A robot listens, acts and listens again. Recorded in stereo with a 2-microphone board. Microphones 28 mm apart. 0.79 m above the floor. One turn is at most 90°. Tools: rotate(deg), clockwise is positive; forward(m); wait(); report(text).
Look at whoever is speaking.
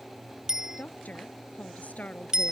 rotate(-65)
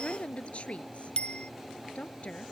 rotate(-50)
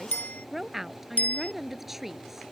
rotate(10)
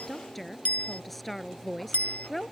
report("Facing the woman speaking.")